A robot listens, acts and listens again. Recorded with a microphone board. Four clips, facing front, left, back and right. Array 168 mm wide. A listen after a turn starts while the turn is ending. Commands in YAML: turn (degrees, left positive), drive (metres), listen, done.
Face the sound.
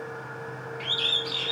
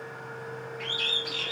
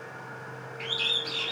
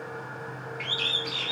turn: -70
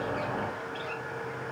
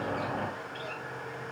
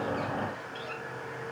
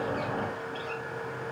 listen: true
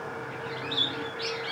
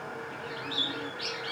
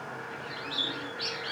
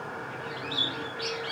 done: "Found it: a bird, straight ahead, under 1 m away."